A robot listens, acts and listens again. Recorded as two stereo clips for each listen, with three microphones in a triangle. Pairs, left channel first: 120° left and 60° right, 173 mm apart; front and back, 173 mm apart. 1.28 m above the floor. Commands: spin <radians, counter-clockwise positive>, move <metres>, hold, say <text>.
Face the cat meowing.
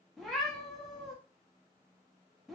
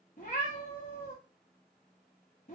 spin 0.52
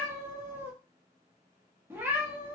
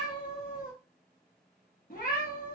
spin 0.26
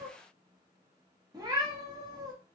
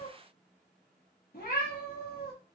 say Facing the cat meowing, 1 to 2 m away.